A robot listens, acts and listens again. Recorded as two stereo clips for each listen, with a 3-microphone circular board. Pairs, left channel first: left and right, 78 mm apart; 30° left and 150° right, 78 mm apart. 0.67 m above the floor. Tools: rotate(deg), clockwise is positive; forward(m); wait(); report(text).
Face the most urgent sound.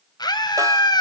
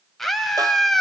rotate(-115)
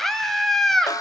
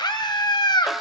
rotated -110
report("Found it: a scream, straight ahead, 2 to 4 m away.")